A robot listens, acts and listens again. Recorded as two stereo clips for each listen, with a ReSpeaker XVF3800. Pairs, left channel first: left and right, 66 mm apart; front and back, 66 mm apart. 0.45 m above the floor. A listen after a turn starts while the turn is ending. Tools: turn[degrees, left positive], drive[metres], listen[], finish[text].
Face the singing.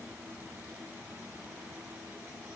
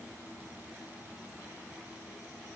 Action: listen[]
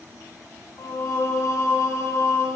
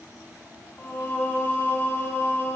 Thought: The singing: 50° left.
Action: turn[50]
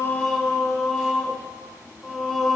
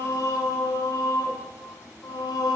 Action: finish[Found it: singing, straight ahead, under 1 m away.]